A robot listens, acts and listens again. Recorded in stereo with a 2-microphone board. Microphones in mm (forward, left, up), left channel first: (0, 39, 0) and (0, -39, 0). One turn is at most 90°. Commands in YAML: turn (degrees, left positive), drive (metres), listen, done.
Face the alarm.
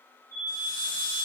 turn: -45
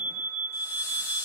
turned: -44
turn: -90
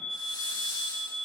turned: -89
done: "Found it: an alarm, straight ahead."